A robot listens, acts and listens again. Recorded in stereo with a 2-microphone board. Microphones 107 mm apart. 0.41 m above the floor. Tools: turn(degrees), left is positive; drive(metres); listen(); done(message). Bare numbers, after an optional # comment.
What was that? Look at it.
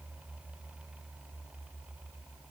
listen()
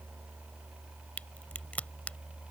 turn(30)
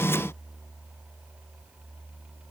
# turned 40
listen()
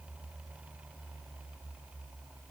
done("I heard a crack, but can't make it out now. It was about 25° right or 125° left.")